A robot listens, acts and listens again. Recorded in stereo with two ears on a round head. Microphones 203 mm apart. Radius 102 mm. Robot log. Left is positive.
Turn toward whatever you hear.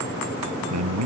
cmd yaw -90
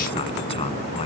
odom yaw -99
note: Nothing new. It was at 10° left.
cmd yaw +10
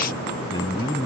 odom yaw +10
note: The man speaking is now 15° left.
cmd yaw +15
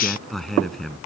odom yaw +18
end: Facing the man speaking.